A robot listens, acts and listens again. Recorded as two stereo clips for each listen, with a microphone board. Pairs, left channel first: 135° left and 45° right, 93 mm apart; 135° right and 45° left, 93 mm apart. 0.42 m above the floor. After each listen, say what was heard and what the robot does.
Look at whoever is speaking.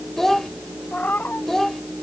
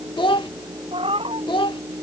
The child speaking: 140° right. Turn 140° right.
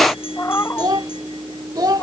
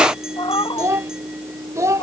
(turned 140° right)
Found it: a child speaking, straight ahead.